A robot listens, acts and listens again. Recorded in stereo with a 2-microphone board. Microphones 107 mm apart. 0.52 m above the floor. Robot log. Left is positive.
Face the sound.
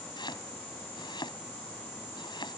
note: The chopping: about 45° left or 135° left.
cmd yaw +45
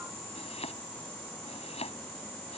note: So it is at 90° left.
cmd yaw +90
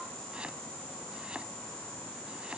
cmd idle
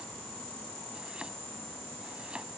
cmd idle
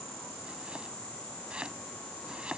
note: The chopping is now 10° right.
cmd yaw -10
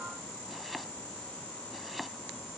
end: Found it: chopping, straight ahead.